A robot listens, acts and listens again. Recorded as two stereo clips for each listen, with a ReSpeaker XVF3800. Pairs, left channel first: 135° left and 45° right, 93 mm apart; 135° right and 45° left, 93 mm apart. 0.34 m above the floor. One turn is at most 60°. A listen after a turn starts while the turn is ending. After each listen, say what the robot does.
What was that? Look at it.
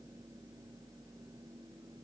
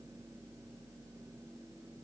Keep listening.
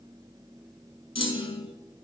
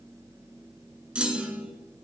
Turn 60° left.
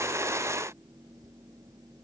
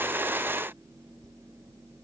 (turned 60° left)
Turn 60° left.
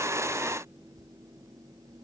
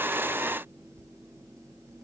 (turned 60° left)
I heard a clunk from this way, but can't make it out now.